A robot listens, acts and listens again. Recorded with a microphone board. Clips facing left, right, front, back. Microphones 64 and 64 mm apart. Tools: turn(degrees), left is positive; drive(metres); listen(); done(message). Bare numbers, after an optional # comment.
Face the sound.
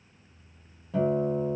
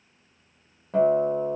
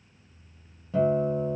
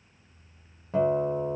# The guitar: 130° right.
turn(-130)
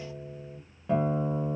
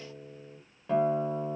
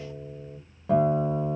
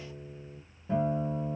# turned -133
done("Facing the guitar, under 1 m away.")